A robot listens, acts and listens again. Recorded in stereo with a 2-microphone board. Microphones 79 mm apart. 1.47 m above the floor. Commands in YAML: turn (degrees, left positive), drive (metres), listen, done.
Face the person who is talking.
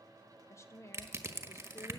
turn: 35
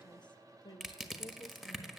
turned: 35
turn: 105
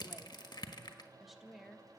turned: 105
done: "Facing the woman speaking."